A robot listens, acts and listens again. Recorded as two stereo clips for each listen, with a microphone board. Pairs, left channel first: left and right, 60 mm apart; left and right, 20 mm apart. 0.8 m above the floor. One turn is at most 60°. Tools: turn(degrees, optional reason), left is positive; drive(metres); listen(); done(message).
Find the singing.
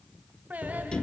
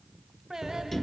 turn(degrees=-25, reason="The singing: about 25° right or 155° right.")
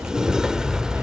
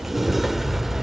listen()
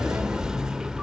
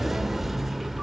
listen()
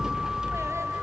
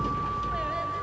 done("I heard singing, but can't make it out now. It was about straight ahead or 130° right.")